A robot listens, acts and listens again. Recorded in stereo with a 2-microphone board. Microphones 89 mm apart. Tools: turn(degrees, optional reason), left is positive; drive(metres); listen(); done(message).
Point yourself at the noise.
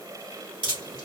turn(degrees=-70, reason="The dripping: about 70° right or 110° right.")
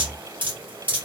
turn(degrees=-20, reason="So it is at 20° right.")
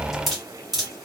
done("Found it: dripping, straight ahead.")